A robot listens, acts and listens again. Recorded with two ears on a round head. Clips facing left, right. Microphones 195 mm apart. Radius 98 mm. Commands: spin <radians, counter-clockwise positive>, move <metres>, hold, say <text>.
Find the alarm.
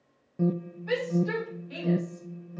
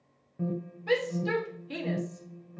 spin 0.96
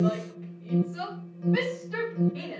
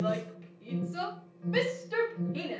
spin 1.13
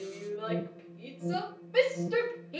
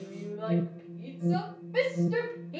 spin -0.17
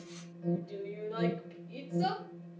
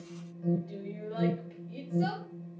say Facing the alarm.